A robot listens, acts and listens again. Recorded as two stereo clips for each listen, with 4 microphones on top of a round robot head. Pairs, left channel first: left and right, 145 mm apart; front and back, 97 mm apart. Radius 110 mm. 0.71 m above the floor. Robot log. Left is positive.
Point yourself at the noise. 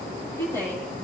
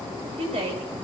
note: The woman speaking: 165° left.
cmd yaw +165
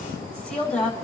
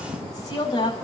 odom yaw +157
note: The woman speaking is now 10° left.
cmd yaw +10
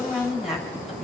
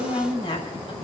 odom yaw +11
end: Found it: a woman speaking, straight ahead.